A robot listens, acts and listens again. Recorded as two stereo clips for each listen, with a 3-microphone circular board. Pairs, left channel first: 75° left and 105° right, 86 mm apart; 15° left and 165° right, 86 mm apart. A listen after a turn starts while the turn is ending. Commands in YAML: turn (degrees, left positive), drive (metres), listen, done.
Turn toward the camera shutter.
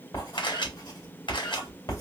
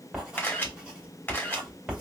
turn: 80
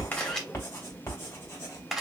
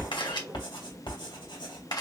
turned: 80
turn: -15
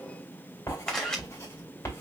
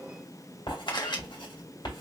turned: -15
done: "Found it: a camera shutter, straight ahead, 1 to 2 m away."